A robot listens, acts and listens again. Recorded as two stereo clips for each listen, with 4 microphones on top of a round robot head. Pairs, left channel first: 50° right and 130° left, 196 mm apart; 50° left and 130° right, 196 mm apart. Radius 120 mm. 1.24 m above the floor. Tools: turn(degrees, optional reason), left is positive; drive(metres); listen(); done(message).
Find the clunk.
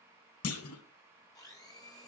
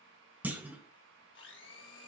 turn(degrees=-50, reason="The clunk: 50° right.")
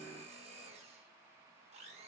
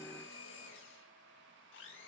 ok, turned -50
done("I heard a clunk from this way, but can't make it out now.")